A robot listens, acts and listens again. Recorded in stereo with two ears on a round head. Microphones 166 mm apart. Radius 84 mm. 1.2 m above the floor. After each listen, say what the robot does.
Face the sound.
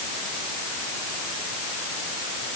Keep listening.
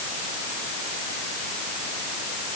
Keep listening.
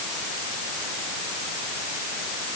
I can't make out anything.